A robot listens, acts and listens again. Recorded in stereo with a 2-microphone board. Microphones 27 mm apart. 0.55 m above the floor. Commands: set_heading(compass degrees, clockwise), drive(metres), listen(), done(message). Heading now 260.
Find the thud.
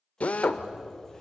set_heading(290)
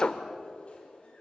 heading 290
listen()
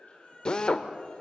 done("I heard a thud, but can't make it out now. It was about straight ahead or 120° right.")